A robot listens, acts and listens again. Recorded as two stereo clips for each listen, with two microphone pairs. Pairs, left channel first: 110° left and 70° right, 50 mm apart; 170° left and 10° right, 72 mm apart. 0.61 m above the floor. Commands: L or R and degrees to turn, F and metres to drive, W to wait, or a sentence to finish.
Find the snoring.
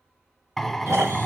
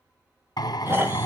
R65
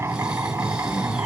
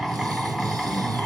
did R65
W
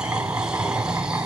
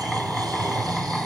W
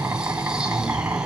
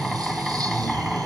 I heard snoring from this way, but can't make it out now.